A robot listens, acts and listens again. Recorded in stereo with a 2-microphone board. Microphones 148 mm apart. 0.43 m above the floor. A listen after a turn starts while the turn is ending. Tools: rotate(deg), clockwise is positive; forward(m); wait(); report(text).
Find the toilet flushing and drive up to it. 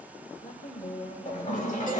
rotate(-60)
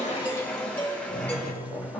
forward(1.0)
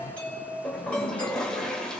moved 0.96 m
forward(1.0)
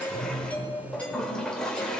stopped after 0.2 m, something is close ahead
report("Arrived at the toilet flushing, straight ahead.")